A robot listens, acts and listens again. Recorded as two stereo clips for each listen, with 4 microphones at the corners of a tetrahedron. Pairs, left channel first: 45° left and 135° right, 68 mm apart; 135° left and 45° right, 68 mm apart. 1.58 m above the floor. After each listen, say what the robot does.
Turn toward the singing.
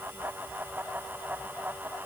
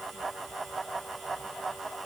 Keep listening.
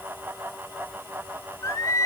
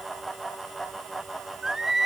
Turn 40° left.
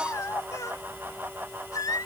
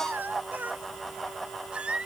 Turn 30° left.
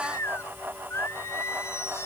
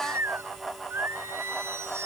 Found it: singing, straight ahead.